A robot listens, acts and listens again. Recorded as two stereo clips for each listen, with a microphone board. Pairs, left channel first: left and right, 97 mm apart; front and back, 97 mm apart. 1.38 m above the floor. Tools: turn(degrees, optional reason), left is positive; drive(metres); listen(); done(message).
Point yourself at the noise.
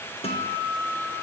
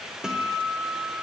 turn(degrees=95, reason="The guitar: 95° left.")
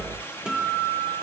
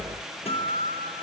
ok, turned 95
turn(degrees=-10, reason="The guitar is now 10° right.")
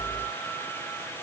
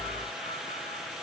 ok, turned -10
listen()
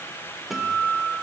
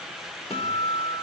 done("Found it: a guitar, straight ahead, 1 to 2 m away.")